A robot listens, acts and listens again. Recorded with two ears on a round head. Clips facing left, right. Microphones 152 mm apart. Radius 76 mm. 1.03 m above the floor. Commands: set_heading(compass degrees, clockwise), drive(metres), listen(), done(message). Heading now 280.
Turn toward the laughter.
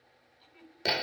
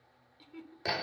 set_heading(10)
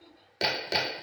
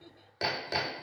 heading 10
done("Facing the laughter.")